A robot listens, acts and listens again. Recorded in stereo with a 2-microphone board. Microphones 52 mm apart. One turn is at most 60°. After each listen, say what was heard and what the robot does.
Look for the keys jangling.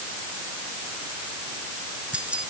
The keys jangling: about 20° right or 160° right. Turn 20° right.
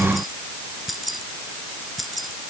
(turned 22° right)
Found it: keys jangling, straight ahead.